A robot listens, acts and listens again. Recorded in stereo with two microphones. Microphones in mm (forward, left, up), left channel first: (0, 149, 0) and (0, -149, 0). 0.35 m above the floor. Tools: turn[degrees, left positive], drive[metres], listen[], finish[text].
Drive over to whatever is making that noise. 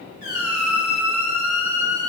Action: turn[-90]
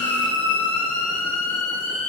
Action: drive[1.0]
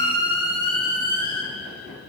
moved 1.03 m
Thought: The squeak is now 15° left.
Action: turn[15]
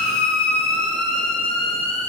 Action: drive[1.0]
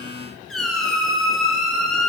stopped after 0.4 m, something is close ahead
Action: finish[I am next to the squeak.]